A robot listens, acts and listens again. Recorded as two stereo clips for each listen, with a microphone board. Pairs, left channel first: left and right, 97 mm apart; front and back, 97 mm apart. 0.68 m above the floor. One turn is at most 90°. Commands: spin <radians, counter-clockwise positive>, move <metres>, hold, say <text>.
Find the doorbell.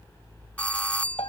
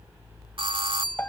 spin 1.57
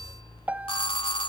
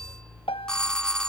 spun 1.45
spin 1.40
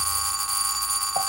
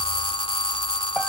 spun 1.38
say Found it: a doorbell, straight ahead.